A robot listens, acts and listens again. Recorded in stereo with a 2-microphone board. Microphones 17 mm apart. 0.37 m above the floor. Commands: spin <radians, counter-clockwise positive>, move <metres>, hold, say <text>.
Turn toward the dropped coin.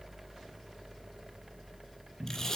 hold
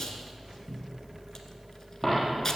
spin -0.52
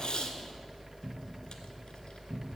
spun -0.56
hold
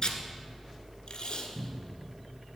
say I heard a dropped coin, but can't make it out now. It was about 25° left or 145° right.